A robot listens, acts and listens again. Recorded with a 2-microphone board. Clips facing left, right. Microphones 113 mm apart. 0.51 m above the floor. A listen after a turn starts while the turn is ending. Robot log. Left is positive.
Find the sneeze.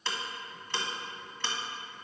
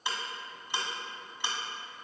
cmd idle
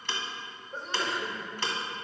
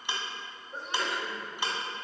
cmd yaw +30
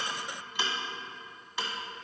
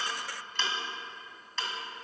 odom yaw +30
cmd idle
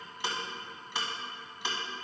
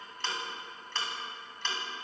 end: I heard a sneeze, but can't make it out now. It was about 30° right or 150° left.